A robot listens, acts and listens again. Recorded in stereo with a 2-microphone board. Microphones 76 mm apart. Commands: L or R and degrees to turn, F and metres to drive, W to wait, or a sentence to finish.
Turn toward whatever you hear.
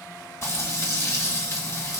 L45
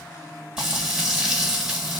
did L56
Facing the frying, 1 to 2 m away.